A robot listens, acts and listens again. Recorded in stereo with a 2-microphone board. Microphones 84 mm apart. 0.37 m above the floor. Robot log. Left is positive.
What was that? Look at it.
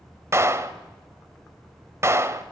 note: The clap: about 35° right or 145° right.
cmd yaw -35
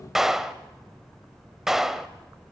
end: Found it: a clap, straight ahead, 1 to 2 m away.